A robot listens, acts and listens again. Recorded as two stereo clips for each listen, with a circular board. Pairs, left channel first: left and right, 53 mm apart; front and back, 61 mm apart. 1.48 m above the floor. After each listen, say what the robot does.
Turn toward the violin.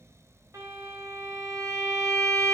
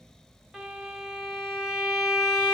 Turn 95° right.
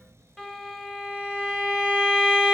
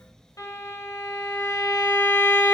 Facing the violin.